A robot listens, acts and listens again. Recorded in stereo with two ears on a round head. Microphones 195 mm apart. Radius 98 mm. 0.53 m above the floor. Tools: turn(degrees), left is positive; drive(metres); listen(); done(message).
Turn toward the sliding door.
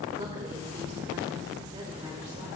listen()
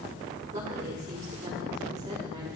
listen()
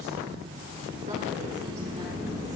turn(degrees=-20)
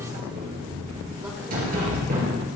turn(degrees=-140)
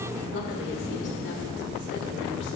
turn(degrees=-20)
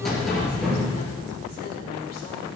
done("Facing the sliding door.")